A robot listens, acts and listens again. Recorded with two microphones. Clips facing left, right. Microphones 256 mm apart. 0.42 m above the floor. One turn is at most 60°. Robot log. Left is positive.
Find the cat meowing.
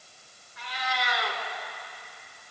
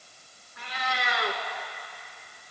note: The cat meowing: about 60° right or 120° right.
cmd yaw -60
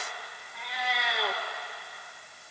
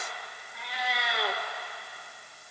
end: Found it: a cat meowing, straight ahead, 2 to 4 m away.